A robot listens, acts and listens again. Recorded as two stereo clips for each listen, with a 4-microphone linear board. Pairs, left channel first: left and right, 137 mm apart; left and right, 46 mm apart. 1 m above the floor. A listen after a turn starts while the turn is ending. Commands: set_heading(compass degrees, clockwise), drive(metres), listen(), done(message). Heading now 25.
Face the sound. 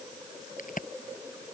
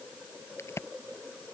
set_heading(295)
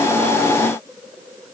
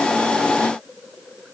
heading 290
done("I heard a crack from this way, but can't make it out now.")